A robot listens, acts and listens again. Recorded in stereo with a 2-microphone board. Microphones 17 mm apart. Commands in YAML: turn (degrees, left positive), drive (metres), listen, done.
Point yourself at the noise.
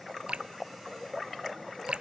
turn: -90
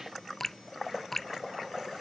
turn: 10
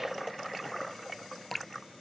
done: "Found it: dripping, straight ahead."